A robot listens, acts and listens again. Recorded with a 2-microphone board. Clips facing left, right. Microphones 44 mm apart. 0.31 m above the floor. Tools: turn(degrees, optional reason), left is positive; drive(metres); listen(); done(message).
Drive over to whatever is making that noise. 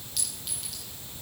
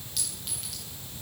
turn(degrees=30)
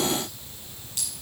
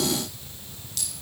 turn(degrees=150, reason="So it is at 150° left.")
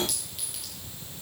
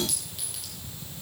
drive(metres=1.0)
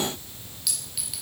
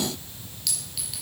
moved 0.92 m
drive(metres=1.0)
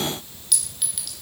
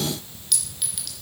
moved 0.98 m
drive(metres=1.0)
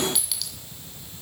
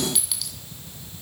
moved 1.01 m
drive(metres=1.0)
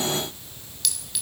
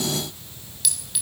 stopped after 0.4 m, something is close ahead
done("Arrived at the clink, straight ahead.")